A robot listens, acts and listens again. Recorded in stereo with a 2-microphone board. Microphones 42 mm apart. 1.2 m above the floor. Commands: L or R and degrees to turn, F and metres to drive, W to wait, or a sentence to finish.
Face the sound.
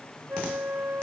R75
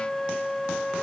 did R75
Facing the flute.